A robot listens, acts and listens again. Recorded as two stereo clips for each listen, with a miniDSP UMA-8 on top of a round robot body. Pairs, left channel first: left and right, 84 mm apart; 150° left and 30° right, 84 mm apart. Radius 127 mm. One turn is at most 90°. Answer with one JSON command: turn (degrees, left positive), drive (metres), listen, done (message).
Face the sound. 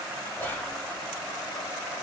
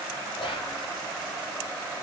{"turn": 90}
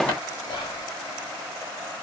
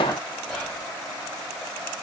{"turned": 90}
{"turn": 65}
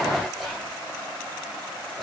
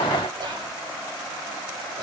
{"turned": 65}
{"done": "Facing the whispering."}